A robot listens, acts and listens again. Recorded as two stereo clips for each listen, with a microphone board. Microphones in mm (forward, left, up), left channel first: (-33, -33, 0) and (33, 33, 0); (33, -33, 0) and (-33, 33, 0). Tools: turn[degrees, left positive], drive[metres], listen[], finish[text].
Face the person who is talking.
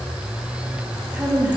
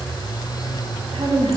Thought: The woman speaking: 120° left.
Action: turn[120]
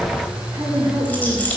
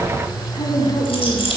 Thought: The woman speaking is now 15° right.
Action: turn[-15]
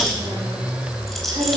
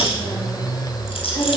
Action: listen[]
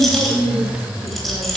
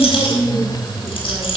Action: finish[Found it: a woman speaking, straight ahead.]